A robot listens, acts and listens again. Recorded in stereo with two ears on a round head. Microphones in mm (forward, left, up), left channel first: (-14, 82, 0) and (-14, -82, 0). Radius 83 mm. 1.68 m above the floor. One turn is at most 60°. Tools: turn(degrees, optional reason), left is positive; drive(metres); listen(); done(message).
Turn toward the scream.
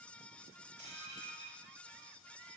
listen()
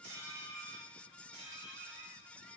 listen()
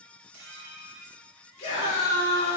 turn(degrees=35, reason="The scream: about 35° left or 145° left.")
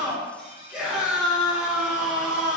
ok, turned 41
done("Facing the scream.")